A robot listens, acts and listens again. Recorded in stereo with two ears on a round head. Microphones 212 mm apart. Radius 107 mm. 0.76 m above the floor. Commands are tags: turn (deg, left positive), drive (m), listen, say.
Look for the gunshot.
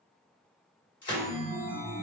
<turn deg="20"/>
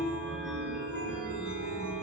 <listen/>
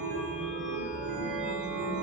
<say>I heard a gunshot, but can't make it out now. It was about straight ahead or 140° left.</say>